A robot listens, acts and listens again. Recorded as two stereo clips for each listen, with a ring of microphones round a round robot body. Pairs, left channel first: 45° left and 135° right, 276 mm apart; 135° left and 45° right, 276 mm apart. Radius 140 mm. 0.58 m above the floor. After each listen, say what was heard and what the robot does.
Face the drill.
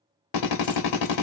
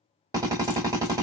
The drill: 35° left. Turn 35° left.
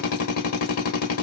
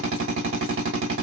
Facing the drill.